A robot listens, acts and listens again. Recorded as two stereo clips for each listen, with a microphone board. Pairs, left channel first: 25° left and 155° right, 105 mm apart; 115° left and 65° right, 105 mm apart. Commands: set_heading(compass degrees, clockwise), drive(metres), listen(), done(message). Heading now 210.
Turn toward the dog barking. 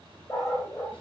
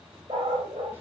set_heading(240)
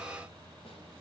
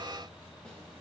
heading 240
listen()
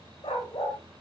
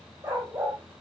done("Found it: a dog barking, straight ahead.")